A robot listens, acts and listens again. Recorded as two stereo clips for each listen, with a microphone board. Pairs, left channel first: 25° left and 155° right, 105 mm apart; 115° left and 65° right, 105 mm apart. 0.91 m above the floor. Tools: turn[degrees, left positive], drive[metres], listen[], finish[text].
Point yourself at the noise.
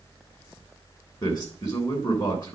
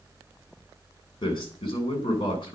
Thought: The man speaking: 70° left.
Action: turn[70]
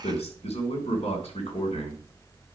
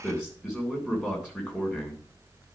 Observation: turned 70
Thought: The man speaking is now 15° left.
Action: turn[15]
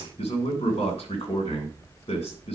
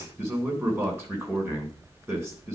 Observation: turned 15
Action: finish[Found it: a man speaking, straight ahead.]